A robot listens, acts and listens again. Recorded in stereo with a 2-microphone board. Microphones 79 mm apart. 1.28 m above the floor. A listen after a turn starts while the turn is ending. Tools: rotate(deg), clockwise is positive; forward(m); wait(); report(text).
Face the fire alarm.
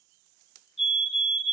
rotate(30)
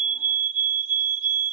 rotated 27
rotate(145)
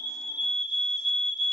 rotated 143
report("Facing the fire alarm.")